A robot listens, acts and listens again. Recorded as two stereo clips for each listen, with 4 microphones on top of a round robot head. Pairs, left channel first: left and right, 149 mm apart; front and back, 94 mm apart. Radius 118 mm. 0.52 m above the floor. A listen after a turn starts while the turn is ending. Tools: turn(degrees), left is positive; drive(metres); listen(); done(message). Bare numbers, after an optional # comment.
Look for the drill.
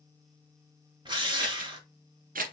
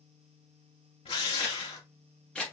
# The drill: 30° right.
turn(-30)
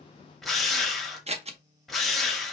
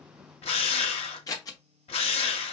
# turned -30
done("Facing the drill.")